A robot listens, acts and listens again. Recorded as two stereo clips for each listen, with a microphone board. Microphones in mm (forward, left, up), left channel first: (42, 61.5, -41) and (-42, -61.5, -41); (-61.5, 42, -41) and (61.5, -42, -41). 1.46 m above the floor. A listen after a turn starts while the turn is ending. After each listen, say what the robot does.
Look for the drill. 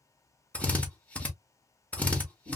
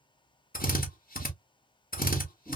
Turn 135° left.
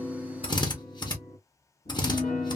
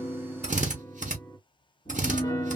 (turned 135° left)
Facing the drill.